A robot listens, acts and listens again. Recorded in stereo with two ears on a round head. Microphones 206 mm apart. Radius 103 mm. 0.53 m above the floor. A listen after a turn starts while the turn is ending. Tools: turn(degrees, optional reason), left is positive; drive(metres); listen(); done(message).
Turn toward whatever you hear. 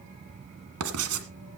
turn(degrees=-70, reason="The writing: about 70° right or 110° right.")
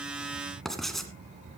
done("Found it: writing, straight ahead.")